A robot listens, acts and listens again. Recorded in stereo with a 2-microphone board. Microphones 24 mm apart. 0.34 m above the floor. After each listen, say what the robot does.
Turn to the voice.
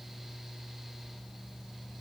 Keep listening.
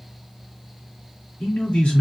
Turn 65° left.
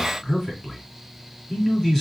Turn 10° left.
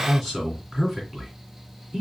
Found it: a man speaking, straight ahead.